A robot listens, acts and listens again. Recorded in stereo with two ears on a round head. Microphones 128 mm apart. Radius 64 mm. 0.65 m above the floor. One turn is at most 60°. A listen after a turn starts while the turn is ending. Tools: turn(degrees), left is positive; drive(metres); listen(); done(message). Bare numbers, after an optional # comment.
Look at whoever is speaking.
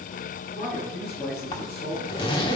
# The man speaking: about 45° left or 135° left.
turn(45)
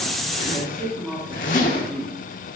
done("Facing the man speaking.")